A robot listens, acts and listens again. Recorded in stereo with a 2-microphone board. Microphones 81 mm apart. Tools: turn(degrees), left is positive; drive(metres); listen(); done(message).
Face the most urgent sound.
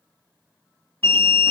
turn(degrees=25)
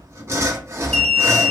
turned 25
done("Found it: an alarm, straight ahead, under 1 m away.")